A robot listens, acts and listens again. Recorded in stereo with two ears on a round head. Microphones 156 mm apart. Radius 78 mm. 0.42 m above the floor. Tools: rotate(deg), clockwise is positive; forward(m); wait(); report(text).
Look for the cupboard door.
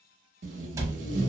rotate(20)
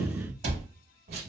rotate(140)
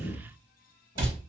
rotate(30)
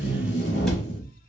report("Facing the cupboard door.")